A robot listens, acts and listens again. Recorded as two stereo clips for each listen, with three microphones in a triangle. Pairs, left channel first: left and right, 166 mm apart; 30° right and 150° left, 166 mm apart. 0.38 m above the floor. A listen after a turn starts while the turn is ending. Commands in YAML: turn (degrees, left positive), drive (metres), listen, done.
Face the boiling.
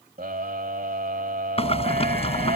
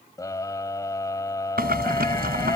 turn: 140
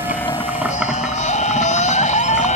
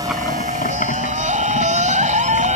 done: "Facing the boiling."